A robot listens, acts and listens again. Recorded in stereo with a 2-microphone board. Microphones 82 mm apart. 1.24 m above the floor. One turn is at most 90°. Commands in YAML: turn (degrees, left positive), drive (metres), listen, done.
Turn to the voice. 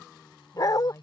turn: 45
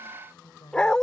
turn: 90
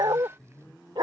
done: "Found it: a woman speaking, straight ahead."